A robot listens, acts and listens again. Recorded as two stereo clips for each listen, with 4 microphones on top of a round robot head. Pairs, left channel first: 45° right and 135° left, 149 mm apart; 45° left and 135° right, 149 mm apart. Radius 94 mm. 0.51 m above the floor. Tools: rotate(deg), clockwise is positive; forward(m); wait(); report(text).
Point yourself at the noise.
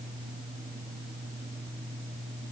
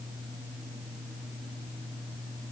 wait()
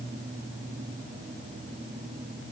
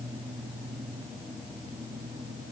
wait()
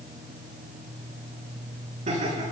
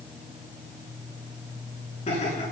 rotate(-90)
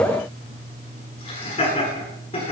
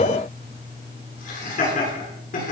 rotate(-10)
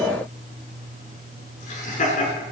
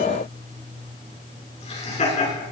report("Facing the laughter.")